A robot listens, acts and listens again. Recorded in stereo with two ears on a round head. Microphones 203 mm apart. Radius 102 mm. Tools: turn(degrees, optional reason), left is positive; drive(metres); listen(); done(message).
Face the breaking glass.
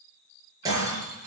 turn(degrees=-15, reason="The breaking glass: about 15° right or 165° right.")
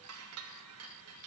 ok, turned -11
listen()
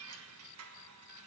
done("I heard breaking glass, but can't make it out now. It was about 5° right or 155° right.")